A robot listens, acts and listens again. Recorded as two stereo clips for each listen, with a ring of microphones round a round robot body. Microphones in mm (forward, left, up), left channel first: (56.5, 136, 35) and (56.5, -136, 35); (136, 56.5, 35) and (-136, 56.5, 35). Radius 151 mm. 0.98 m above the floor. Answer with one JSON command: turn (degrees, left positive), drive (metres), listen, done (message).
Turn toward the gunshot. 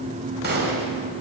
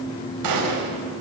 {"turn": -150}
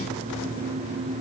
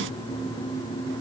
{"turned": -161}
{"turn": 10}
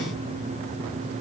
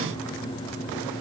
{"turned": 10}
{"done": "I heard a gunshot from this way, but can't make it out now."}